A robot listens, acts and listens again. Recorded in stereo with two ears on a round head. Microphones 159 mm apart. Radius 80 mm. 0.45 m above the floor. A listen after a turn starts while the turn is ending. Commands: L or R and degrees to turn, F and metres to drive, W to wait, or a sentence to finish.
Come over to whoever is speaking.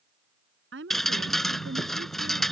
R90
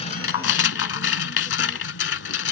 W
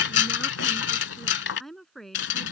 F1.0
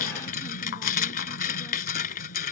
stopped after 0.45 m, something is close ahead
W
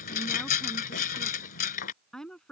Something is in my way. I am facing the woman speaking but have not reached it.